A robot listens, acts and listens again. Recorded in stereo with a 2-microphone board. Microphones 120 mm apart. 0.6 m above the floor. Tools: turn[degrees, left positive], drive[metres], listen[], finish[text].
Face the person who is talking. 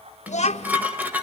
Thought: The child speaking: about 70° left or 110° left.
Action: turn[70]
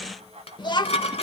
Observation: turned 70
Thought: So it is at 40° left.
Action: turn[40]
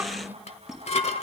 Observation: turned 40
Thought: The child speaking is now 15° right.
Action: turn[-15]
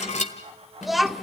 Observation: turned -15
Action: finish[Facing the child speaking, 1 to 2 m away.]